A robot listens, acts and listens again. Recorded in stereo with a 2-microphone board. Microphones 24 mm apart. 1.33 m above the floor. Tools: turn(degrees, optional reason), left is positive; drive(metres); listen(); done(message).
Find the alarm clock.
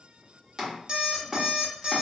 turn(degrees=-35, reason="The alarm clock: about 35° right or 145° right.")
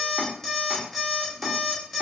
done("Facing the alarm clock, under 1 m away.")